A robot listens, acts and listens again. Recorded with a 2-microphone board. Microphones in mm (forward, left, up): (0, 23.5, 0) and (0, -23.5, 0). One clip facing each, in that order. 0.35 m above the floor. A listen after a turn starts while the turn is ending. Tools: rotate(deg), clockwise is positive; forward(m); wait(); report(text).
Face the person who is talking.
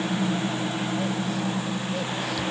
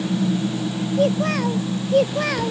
rotate(65)
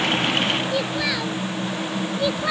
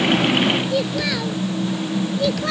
rotate(-10)
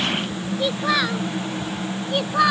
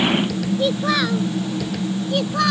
rotate(-15)
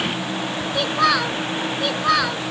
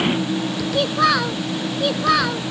report("Found it: a child speaking, straight ahead.")